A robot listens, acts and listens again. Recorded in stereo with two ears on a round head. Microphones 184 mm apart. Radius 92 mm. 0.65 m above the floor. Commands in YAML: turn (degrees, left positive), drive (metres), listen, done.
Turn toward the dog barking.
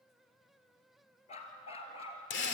turn: 30
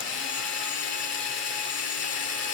listen: true
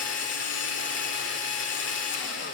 listen: true
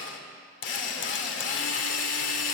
done: "I heard a dog barking, but can't make it out now. It was about straight ahead or 120° left."